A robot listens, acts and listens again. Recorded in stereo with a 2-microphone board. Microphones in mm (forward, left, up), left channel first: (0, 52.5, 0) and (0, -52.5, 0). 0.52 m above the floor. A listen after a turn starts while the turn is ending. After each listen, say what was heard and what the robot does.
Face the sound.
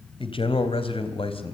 The man speaking: about 65° left or 115° left. Turn 65° left.
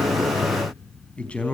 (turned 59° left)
So it is at 10° left. Turn 10° left.
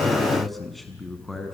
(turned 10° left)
Found it: a man speaking, straight ahead.